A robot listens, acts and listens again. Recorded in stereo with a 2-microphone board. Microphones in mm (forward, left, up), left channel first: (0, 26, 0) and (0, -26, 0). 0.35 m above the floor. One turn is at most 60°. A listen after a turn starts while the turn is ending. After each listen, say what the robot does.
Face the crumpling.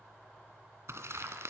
Turn 60° right.
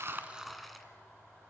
Facing the crumpling, 2 to 4 m away.